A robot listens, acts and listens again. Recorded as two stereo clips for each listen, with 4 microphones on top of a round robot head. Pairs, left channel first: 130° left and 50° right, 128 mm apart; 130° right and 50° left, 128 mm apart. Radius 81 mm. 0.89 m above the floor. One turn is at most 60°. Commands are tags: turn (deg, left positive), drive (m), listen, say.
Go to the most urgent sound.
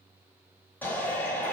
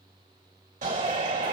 <turn deg="55"/>
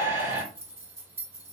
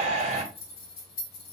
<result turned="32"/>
<turn deg="20"/>
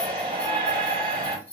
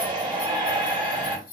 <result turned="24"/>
<drive m="1.0"/>
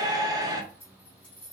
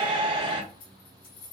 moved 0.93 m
<drive m="1.0"/>
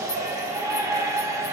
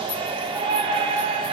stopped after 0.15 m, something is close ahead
<turn deg="10"/>
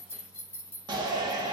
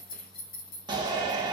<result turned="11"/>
<say>Arrived at the shout, straight ahead.</say>